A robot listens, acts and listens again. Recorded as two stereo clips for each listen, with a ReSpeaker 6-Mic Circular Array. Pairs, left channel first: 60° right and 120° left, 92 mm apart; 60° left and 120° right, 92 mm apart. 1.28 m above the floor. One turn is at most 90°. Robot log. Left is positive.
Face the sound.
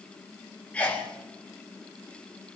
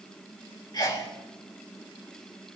note: The sneeze: 15° left.
cmd yaw +15
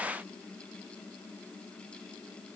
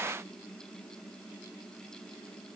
end: I heard a sneeze from this way, but can't make it out now.